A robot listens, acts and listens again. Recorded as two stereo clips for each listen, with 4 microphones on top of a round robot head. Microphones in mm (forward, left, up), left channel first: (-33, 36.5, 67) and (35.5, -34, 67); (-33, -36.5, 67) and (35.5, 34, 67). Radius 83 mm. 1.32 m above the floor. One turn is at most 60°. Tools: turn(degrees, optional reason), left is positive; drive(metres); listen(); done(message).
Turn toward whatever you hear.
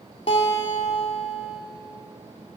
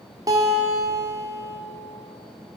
turn(degrees=60, reason="The guitar: 105° left.")
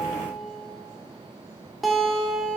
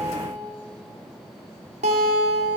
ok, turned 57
turn(degrees=45, reason="The guitar is now 45° left.")
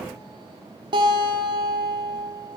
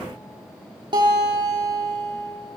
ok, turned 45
done("Found it: a guitar, straight ahead.")